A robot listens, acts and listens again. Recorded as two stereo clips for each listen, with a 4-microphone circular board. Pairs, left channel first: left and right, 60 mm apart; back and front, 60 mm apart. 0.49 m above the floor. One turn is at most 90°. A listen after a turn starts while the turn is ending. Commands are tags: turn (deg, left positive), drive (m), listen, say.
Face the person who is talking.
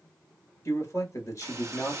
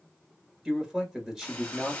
<turn deg="85"/>
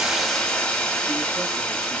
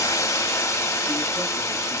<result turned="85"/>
<listen/>
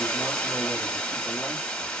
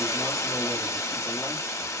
<listen/>
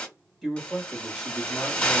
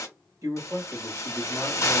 <say>Found it: a man speaking, straight ahead, 1 to 2 m away.</say>